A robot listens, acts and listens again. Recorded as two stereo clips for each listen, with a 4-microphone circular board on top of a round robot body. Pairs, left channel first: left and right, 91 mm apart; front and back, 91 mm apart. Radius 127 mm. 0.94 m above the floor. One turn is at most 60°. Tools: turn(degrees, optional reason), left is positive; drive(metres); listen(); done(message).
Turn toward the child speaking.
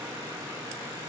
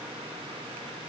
listen()
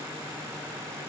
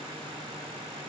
listen()
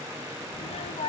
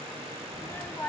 turn(degrees=60, reason="The child speaking: 70° left.")
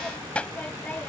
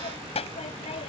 turn(degrees=15, reason="The child speaking is now 15° left.")
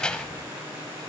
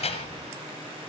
turn(degrees=10, reason="The child speaking is now 10° left.")
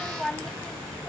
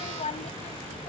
turn(degrees=10, reason="The child speaking is now 10° left.")
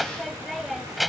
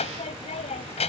done("Facing the child speaking.")